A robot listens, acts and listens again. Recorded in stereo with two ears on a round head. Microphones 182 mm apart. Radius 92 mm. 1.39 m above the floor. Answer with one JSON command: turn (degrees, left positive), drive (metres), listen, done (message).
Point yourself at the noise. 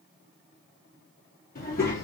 {"turn": 50}
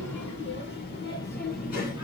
{"turn": 40}
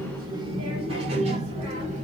{"turn": -35}
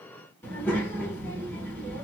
{"turn": 10}
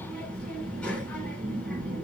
{"done": "Facing the child speaking."}